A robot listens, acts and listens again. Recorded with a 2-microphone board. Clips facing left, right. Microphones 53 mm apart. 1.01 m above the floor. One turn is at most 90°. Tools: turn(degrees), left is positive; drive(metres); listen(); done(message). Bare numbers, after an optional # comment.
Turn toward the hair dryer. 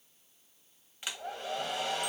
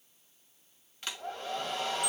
turn(30)
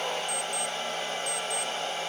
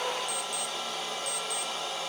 # So it is at 140° left.
turn(90)
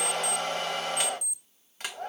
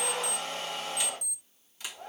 # The hair dryer is now 55° left.
turn(55)
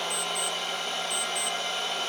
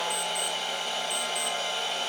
done("Found it: a hair dryer, straight ahead.")